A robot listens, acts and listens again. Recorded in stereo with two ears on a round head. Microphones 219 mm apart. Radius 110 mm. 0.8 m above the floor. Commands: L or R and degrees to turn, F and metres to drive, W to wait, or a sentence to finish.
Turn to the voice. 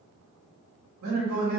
R90
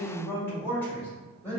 L10
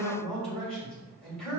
Found it: a man speaking, straight ahead.